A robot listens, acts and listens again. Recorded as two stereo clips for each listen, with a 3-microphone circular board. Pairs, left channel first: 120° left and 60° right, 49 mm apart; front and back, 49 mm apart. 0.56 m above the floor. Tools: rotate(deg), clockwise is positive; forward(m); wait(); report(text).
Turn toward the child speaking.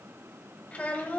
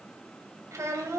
rotate(-180)
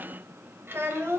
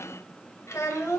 rotate(25)
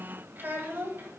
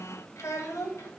rotate(15)
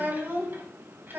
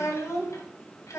rotate(10)
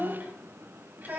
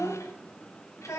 report("Found it: a child speaking, straight ahead.")